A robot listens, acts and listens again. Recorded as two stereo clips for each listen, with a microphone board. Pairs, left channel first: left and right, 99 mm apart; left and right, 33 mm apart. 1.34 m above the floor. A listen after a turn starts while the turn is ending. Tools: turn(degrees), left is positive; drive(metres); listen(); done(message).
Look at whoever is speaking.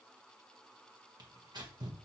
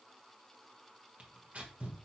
listen()
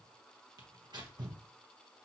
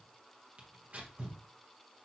listen()
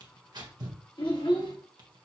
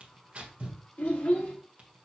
turn(degrees=55)
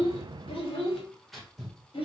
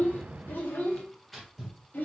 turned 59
turn(degrees=80)
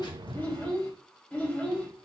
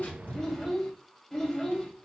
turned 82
turn(degrees=10)
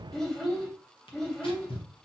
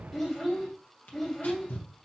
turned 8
done("Found it: a child speaking, straight ahead, 1 to 2 m away.")